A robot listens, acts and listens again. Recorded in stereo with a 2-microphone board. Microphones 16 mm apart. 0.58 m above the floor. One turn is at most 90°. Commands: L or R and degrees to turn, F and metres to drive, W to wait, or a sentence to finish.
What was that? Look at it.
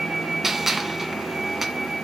R30
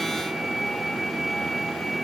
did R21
W
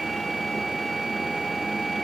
I heard a gunshot, but can't make it out now. It was about 10° left or 145° right.